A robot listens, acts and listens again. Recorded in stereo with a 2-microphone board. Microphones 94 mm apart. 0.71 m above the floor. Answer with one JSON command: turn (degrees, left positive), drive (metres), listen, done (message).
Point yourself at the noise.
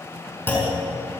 {"turn": 20}
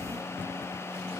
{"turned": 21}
{"listen": true}
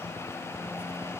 {"done": "I heard a clunk, but can't make it out now. It was about straight ahead or 135° left."}